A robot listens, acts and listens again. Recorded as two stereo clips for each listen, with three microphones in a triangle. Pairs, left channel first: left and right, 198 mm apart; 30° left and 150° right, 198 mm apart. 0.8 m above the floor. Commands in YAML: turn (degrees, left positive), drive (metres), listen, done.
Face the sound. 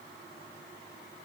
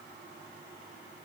listen: true
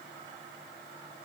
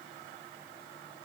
listen: true
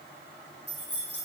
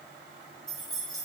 turn: 115
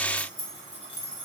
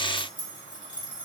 turn: 35
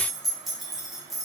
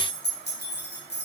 done: "Facing the keys jangling, under 1 m away."